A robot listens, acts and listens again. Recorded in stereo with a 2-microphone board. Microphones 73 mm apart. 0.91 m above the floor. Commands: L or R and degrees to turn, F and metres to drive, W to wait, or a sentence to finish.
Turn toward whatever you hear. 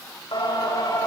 L90
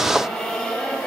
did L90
L10
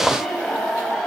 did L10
Found it: singing, straight ahead, over 4 m away.